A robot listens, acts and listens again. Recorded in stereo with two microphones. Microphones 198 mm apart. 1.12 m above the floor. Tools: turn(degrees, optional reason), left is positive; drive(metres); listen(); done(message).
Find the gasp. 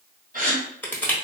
turn(degrees=-45, reason="The gasp: about 45° right or 135° right.")
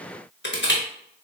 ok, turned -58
listen()
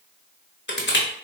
done("I heard a gasp, but can't make it out now. It was about 15° left or 80° right.")